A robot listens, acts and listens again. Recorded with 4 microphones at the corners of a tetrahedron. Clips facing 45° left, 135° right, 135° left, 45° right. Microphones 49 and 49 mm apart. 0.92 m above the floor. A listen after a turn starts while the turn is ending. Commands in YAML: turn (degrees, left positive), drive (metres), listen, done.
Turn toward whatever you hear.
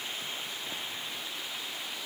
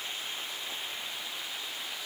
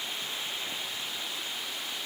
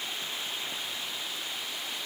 listen: true
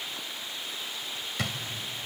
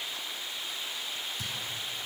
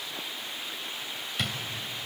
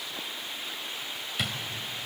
turn: 40
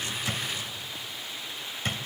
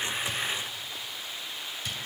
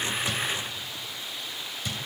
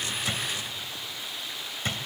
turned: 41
done: "Facing the drawer."